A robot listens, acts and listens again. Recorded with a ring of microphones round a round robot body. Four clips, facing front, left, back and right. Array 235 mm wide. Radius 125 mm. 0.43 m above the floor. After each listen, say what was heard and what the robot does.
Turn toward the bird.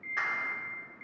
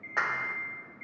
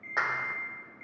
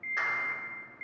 Keep listening.
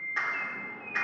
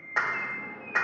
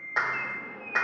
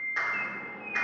The bird: 115° right. Turn 115° right.
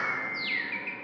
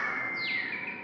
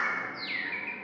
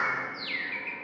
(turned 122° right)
Facing the bird, 2 to 4 m away.